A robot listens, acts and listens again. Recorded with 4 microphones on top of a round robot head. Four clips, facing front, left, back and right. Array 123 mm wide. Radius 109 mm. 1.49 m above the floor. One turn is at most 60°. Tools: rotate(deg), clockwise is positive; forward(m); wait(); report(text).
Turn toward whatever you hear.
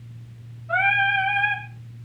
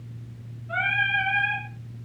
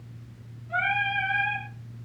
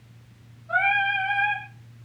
rotate(30)
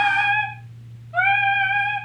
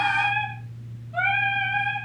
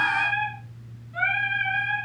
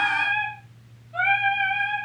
report("Found it: singing, straight ahead.")